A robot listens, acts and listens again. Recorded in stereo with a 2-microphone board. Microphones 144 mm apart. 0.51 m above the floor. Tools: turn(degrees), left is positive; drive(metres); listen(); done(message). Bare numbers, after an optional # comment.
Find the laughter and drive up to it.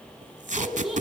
turn(30)
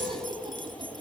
# So it is at 35° right.
turn(-35)
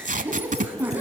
# The laughter is now 15° right.
turn(-15)
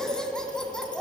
drive(1.0)
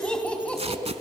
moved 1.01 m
# The laughter is now 10° left.
turn(10)
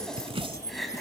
drive(1.0)
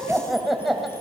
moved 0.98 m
drive(1.0)
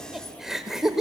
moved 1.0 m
drive(1.0)
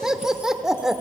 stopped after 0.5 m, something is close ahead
done("Arrived at the laughter, straight ahead.")